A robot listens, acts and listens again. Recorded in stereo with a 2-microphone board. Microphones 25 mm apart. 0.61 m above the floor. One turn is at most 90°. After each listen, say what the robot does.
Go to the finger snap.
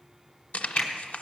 Turn 25° left.
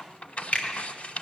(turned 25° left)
Turn 90° left.
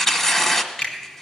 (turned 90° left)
Turn 75° left.
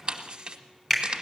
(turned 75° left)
Turn 20° left.
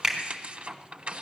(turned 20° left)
Drive 1.0 m forward.
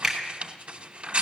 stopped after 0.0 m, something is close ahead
Blocked. The finger snap is further on, straight ahead.